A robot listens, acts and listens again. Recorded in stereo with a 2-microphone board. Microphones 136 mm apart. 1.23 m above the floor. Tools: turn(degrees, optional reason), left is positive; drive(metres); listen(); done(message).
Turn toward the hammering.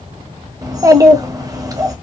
listen()
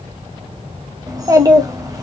listen()
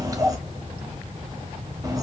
done("I can't make out hammering to turn to.")